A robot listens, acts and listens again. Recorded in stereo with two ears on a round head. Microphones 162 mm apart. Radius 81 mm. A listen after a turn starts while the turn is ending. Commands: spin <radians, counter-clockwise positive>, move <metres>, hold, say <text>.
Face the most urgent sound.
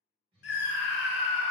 spin 1.13
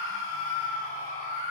spin 0.79
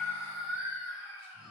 say Facing the scream.